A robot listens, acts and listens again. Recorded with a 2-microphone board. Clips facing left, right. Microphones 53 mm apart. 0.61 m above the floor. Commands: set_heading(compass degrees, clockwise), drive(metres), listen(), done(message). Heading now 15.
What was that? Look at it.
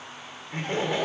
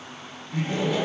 set_heading(340)
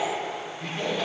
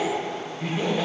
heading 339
set_heading(349)
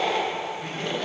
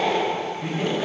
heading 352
set_heading(7)
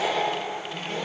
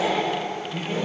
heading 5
set_heading(20)
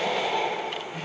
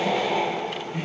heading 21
set_heading(31)
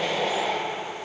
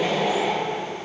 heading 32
done("Facing the laughter.")